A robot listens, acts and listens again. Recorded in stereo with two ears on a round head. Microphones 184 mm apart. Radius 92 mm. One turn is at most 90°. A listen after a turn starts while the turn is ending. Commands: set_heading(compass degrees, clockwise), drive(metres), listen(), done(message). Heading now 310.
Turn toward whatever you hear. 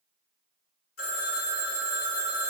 set_heading(255)
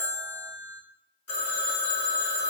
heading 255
set_heading(185)
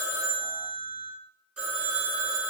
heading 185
done("Found it: a phone ringing, straight ahead, 1 to 2 m away.")